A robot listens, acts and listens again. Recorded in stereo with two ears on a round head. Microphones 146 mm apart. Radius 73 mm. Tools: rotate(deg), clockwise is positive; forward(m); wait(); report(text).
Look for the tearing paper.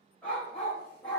wait()
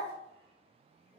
wait()
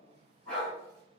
report("I can't make out tearing paper to turn to.")